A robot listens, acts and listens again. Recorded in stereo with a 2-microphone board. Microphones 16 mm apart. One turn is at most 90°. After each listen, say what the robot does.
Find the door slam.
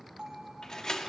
Turn 50° left.
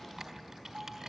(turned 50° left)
Keep listening.
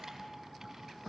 I heard a door slam, but can't make it out now. It was about straight ahead or 80° left.